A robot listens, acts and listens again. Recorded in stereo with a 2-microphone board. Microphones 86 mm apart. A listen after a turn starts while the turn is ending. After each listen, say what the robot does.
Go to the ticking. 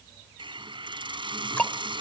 Turn 15° left.
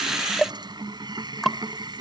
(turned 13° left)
Drive 1.0 m forward.
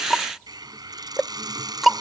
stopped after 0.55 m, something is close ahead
Blocked. The ticking is further on, straight ahead.